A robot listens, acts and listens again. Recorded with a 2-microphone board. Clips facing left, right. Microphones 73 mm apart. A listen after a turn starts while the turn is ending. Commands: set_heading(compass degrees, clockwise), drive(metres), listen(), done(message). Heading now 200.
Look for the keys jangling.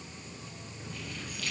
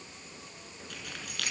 set_heading(270)
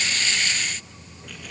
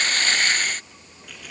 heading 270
listen()
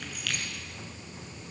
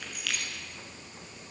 done("Found it: keys jangling, straight ahead.")